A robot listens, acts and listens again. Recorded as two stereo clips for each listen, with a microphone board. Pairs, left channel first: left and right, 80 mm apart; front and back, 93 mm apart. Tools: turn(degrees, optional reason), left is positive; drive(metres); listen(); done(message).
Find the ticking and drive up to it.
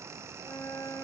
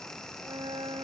listen()
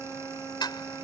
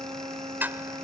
turn(degrees=110, reason="The ticking: 110° left.")
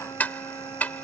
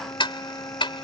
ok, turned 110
turn(degrees=20, reason="The ticking is now 20° left.")
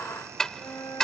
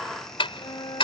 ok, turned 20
drive(metres=1.0)
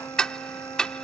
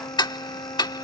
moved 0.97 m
turn(degrees=10, reason="The ticking is now 10° left.")
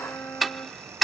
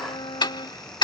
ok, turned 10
drive(metres=1.0)
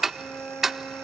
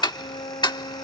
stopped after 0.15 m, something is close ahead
done("I am next to the ticking.")